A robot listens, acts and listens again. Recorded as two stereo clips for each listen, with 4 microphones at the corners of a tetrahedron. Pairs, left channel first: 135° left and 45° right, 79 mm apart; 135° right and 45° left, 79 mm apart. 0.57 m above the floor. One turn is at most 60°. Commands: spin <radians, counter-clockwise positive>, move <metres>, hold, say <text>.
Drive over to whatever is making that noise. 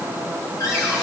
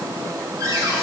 spin 1.05
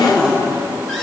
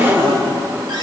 spin 0.87
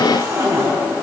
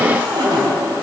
spin 0.17
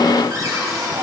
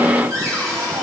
move 1.0
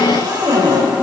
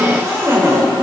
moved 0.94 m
spin -0.17
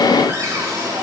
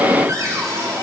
move 1.0
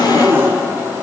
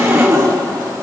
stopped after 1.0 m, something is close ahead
say I am next to the cupboard door.